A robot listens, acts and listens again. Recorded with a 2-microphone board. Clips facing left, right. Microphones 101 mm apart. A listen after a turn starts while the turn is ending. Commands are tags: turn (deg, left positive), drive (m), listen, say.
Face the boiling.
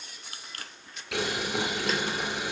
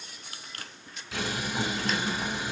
<turn deg="70"/>
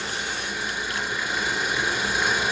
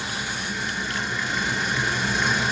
<turn deg="10"/>
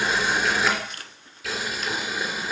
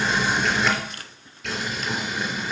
<say>Facing the boiling.</say>